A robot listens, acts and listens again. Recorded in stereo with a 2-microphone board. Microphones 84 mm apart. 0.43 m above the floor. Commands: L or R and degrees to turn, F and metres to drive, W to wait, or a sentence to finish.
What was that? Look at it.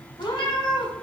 L90
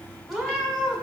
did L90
Found it: a cat meowing, straight ahead.